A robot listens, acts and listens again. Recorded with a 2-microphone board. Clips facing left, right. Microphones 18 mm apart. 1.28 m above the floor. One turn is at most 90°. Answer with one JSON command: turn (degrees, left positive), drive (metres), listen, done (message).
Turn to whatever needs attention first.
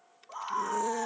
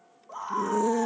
{"turn": 30}
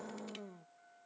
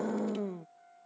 {"turn": -25}
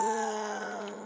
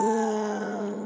{"done": "Facing the scream."}